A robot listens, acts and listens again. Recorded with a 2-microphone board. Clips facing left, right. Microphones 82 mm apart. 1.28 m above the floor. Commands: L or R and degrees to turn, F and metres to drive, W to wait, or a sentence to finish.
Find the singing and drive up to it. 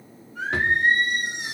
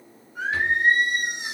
R15
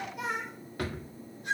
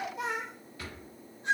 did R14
R150
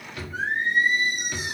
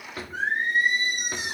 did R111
R40
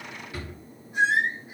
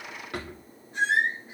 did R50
L10
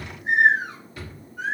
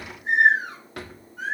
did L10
F1.0
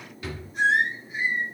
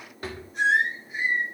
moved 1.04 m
F1.0
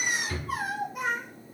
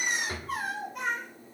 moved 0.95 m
F1.0
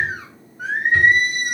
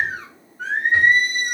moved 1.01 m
F1.0
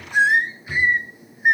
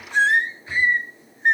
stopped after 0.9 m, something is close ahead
L10
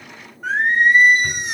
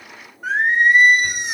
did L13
Arrived at the singing, straight ahead.